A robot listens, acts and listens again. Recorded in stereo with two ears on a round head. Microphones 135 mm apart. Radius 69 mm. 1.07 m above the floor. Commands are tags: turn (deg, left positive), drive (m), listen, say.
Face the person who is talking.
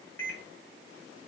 <listen/>
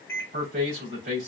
<turn deg="-65"/>
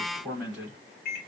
<say>Facing the man speaking, 2 to 4 m away.</say>